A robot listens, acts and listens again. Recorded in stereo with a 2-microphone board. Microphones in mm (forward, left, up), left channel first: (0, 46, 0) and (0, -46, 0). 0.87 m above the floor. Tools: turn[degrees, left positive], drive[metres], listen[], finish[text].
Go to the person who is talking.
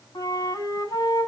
Action: listen[]
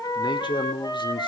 Thought: The man speaking: about 60° left or 120° left.
Action: turn[60]
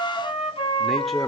Action: listen[]
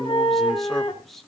Action: drive[1.0]
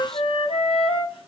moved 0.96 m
Action: listen[]
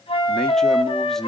Action: drive[1.0]
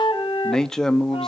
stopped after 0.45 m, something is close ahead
Thought: The man speaking is now 10° left.
Action: turn[10]
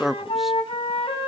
Action: finish[I am next to the man speaking.]